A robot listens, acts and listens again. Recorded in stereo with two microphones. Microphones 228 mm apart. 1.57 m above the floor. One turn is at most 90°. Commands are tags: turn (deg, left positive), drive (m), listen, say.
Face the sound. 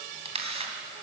<turn deg="-25"/>
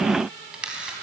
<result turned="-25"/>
<say>Found it: a camera shutter, straight ahead.</say>